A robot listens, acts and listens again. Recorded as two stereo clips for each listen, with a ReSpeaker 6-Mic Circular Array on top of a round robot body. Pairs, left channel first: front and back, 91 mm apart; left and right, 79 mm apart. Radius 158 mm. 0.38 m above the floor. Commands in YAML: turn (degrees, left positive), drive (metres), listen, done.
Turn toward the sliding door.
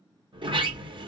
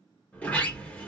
turn: 165
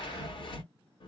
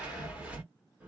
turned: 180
turn: -15
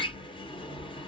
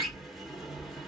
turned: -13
done: "Facing the sliding door, 1 to 2 m away."